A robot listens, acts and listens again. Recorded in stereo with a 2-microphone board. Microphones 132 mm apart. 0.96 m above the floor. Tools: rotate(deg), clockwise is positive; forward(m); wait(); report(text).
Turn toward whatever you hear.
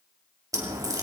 rotate(25)
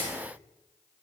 wait()
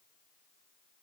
report("I heard a crack, but can't make it out now. It was about straight ahead or 130° right.")